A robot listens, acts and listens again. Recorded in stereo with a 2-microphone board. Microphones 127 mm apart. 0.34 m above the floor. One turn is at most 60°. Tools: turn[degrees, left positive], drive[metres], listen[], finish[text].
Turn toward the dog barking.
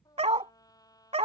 Thought: The dog barking: about 55° right or 125° right.
Action: turn[-55]
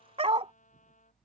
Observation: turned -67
Thought: So it is at 55° right.
Action: turn[-55]
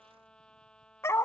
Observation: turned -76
Thought: The dog barking is now 20° left.
Action: turn[20]
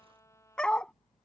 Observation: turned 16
Action: finish[Found it: a dog barking, straight ahead.]